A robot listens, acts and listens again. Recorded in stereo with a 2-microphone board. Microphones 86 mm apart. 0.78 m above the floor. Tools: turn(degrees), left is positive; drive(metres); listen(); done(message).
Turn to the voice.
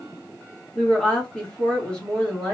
turn(degrees=30)
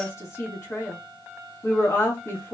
turn(degrees=140)
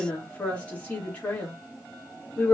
turn(degrees=20)
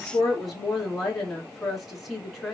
done("Found it: a woman speaking, straight ahead.")